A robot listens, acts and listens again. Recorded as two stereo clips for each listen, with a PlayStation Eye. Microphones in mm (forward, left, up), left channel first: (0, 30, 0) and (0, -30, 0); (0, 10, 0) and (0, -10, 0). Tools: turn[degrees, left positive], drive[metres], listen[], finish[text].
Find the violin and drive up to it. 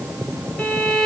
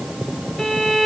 Action: turn[30]
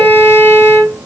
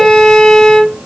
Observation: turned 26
Thought: So it is at 140° left.
Action: turn[140]
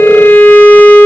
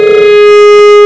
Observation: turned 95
Thought: The violin is now 45° left.
Action: turn[45]
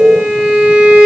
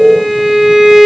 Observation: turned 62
Thought: The violin is now 20° right.
Action: turn[-20]
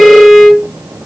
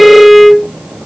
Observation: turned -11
Action: drive[1.0]
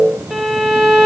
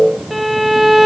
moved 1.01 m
Action: drive[1.0]
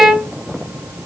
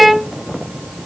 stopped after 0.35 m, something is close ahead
Action: finish[I am next to the violin.]